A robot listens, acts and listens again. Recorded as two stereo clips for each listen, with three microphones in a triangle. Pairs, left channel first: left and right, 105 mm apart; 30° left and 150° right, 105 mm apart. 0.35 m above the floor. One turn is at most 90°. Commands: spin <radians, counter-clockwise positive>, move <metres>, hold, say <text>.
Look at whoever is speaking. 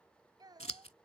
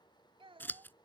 spin -1.57
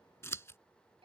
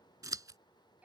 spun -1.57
spin -1.31
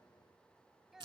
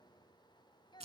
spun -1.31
say Facing the child speaking.